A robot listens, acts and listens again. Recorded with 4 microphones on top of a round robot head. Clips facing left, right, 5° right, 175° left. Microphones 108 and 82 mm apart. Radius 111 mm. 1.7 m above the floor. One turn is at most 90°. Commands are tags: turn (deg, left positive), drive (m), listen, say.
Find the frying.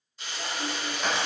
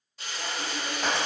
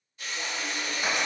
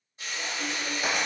<turn deg="-90"/>
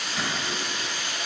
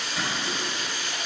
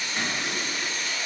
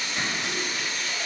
<turn deg="-45"/>
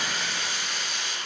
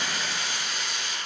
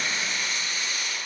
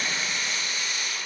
<say>Facing the frying.</say>